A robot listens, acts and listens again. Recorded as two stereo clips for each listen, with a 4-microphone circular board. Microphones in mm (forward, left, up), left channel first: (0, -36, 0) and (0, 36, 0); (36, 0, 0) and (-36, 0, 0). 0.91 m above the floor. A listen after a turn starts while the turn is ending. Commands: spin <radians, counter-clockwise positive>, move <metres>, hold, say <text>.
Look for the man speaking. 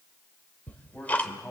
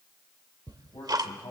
spin -0.26
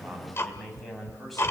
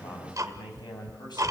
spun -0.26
say Facing the man speaking, over 4 m away.